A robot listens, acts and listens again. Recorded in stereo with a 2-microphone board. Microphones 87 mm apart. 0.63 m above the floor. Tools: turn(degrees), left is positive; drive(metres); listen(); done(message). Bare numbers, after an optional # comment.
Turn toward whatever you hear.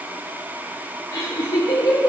# The laughter: about 60° left or 120° left.
turn(60)
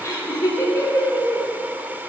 # So it is at 35° left.
turn(35)
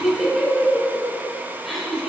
done("Facing the laughter.")